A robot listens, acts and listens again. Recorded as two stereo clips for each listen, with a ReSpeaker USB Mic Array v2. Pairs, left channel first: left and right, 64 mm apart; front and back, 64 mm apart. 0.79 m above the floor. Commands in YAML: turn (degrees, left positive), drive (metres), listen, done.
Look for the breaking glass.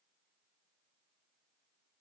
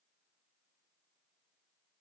listen: true
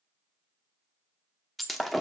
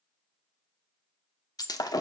done: "Facing the breaking glass, under 1 m away."